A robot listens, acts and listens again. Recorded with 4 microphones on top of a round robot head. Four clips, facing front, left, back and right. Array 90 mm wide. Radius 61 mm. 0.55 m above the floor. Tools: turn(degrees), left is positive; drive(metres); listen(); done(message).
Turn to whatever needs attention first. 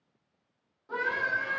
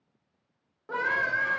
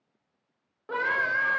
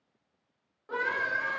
turn(degrees=160)
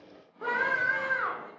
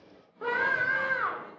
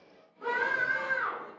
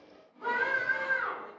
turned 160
turn(degrees=55)
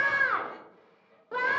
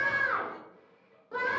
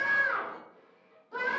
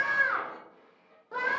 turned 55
done("Found it: a scream, straight ahead, 1 to 2 m away.")